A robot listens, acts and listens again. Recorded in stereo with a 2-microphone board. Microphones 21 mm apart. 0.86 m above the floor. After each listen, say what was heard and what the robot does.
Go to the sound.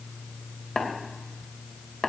The tapping: about 30° left or 150° left. Turn 30° left.
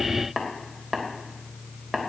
Drive 1.0 m forward.
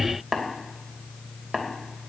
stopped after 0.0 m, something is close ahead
Blocked. The tapping is further on, straight ahead.